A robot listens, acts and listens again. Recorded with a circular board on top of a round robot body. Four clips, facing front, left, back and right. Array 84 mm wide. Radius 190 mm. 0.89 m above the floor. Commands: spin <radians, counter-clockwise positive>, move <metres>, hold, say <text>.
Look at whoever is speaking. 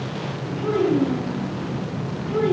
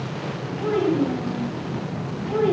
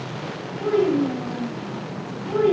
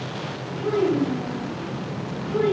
spin 2.09
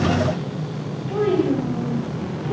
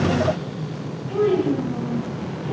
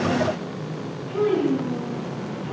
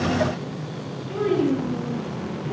spin 0.35
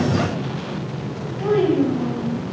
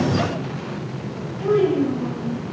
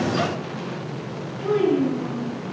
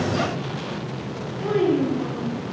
say Facing the child speaking.